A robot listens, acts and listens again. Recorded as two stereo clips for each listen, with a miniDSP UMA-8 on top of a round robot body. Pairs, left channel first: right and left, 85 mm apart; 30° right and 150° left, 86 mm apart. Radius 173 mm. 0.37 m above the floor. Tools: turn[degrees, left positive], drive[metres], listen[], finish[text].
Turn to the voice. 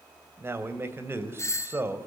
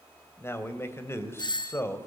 Thought: The man speaking: 30° left.
Action: turn[30]
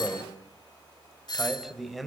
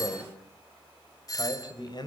Action: finish[Facing the man speaking, 2 to 4 m away.]